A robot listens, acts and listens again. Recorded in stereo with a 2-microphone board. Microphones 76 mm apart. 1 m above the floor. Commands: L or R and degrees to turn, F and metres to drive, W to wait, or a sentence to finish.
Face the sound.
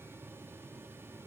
W
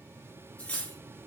L15
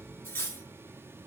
L150
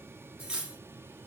R15
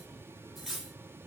Found it: cutlery clinking, straight ahead, 1 to 2 m away.